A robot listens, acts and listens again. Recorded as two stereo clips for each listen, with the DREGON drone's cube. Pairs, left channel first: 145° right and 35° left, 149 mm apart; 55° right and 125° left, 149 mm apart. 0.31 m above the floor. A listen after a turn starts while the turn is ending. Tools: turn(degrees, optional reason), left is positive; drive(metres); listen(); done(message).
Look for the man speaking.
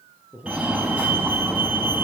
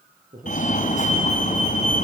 turn(degrees=110, reason="The man speaking: 110° left.")
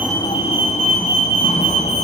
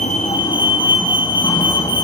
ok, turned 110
listen()
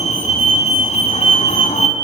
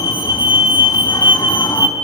listen()
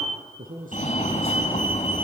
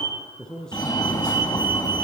turn(degrees=30, reason="The man speaking is now 30° left.")
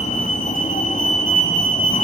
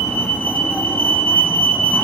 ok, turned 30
listen()
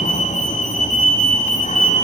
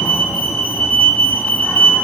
listen()
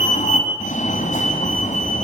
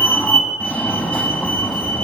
done("I heard a man speaking from this way, but can't make it out now.")